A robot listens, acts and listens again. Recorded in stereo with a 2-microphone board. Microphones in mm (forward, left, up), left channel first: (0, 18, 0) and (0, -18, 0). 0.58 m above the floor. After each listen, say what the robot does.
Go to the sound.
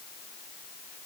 Keep listening.
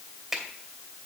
Turn 30° right.
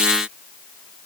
Keep listening.
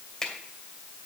Turn 20° left.
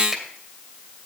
Keep listening.
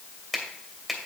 Drive 1.0 m forward.
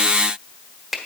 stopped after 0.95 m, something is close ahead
Arrived at the finger snap, straight ahead.